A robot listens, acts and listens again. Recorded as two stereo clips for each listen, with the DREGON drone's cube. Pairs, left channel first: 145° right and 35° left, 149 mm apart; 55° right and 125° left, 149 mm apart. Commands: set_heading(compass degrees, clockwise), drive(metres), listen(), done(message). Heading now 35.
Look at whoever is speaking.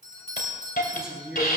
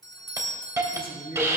set_heading(85)
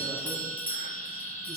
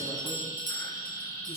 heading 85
listen()
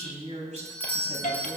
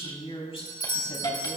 done("Found it: a woman speaking, straight ahead, over 4 m away.")